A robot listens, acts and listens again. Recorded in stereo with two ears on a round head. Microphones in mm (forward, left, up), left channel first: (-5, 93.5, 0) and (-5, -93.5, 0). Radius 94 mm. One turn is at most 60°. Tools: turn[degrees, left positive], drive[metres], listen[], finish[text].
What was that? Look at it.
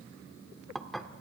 Action: turn[30]
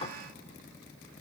Thought: So it is at 145° left.
Action: turn[60]
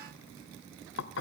Thought: The dishes clattering is now 75° left.
Action: turn[60]
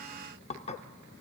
Thought: The dishes clattering is now 35° left.
Action: turn[35]
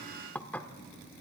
Thought: The dishes clattering is now 10° left.
Action: turn[10]
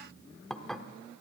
Action: finish[Facing the dishes clattering.]